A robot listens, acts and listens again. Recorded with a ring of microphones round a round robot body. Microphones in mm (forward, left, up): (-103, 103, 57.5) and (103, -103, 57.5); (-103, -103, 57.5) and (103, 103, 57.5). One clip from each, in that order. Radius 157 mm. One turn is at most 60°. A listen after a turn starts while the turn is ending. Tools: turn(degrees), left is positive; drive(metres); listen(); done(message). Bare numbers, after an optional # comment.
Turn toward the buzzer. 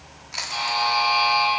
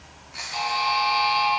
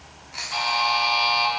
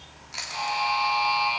# The buzzer: 175° left.
turn(60)
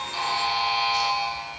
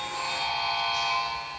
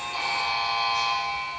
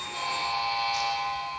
# The buzzer is now 125° left.
turn(60)
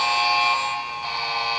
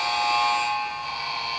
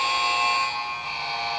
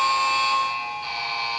# The buzzer is now 50° left.
turn(50)
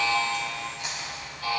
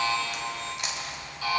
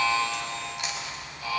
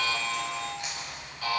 # The buzzer is now 10° right.
turn(-10)
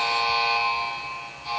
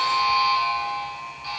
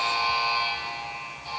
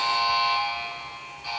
done("Found it: a buzzer, straight ahead.")